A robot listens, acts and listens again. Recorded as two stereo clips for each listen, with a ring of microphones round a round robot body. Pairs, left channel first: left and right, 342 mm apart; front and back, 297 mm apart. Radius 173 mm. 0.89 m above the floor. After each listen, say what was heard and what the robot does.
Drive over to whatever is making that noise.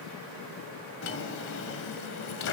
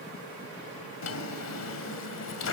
The drawer: 35° left. Turn 35° left.
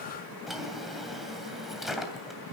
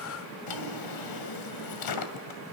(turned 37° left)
Drive 1.0 m forward.
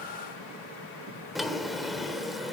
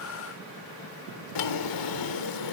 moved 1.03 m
Drive 1.0 m forward.
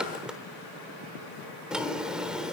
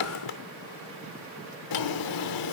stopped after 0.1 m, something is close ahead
I am next to the drawer.